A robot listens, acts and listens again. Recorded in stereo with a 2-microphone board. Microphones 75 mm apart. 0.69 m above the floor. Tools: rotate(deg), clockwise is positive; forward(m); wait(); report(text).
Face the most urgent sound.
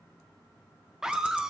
rotate(30)
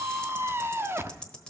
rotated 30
rotate(145)
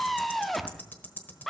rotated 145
report("Facing the scream.")